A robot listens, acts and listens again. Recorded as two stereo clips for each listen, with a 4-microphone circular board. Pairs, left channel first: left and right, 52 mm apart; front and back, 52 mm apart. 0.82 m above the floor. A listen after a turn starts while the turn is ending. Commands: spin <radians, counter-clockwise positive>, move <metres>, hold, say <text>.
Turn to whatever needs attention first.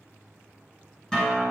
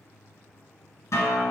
hold
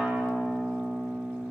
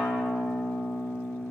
hold
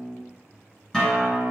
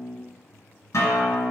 say I can't make out anything urgent to turn to.